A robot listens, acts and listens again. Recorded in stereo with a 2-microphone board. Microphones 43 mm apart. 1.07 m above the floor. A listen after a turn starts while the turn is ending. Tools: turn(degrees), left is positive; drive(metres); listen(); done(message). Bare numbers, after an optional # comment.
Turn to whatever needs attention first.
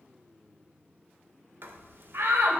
# The shout: about 65° right or 115° right.
turn(-65)
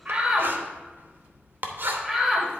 done("Found it: a shout, straight ahead, 1 to 2 m away.")